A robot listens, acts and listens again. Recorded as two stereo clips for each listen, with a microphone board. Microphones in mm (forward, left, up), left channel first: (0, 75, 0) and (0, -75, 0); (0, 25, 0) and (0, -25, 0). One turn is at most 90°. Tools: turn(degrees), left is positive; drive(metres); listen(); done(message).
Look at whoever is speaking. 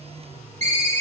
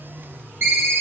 listen()
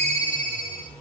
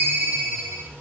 listen()
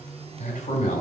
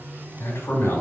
turn(degrees=55)
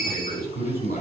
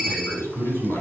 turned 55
turn(degrees=70)
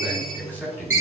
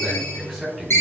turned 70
turn(degrees=15)
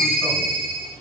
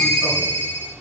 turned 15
listen()
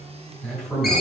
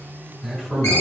done("Facing the man speaking, over 4 m away.")